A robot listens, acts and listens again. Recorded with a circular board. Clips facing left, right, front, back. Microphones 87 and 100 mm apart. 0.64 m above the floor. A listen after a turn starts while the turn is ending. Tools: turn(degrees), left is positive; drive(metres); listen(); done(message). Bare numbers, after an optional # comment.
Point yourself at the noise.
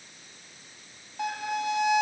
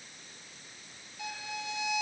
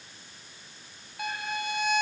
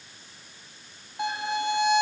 # The violin: 115° left.
turn(115)
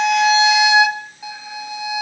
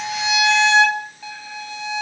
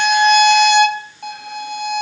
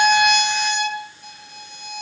# The violin is now 15° left.
turn(15)
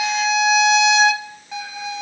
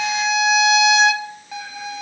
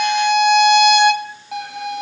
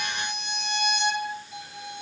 done("Found it: a violin, straight ahead, 1 to 2 m away.")